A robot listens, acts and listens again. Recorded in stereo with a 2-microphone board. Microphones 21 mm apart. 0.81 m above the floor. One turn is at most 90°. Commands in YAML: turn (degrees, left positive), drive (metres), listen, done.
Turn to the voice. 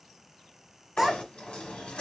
turn: -15
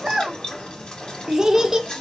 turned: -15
turn: -90
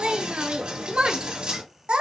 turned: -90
turn: -50
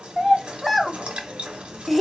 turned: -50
done: "Facing the child speaking, under 1 m away."